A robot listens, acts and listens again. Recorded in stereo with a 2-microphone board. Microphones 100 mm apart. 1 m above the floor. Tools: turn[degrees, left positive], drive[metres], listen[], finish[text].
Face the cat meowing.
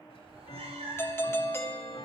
Action: turn[-90]
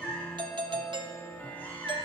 Thought: So it is at 20° left.
Action: turn[20]
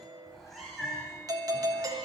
Action: finish[Facing the cat meowing.]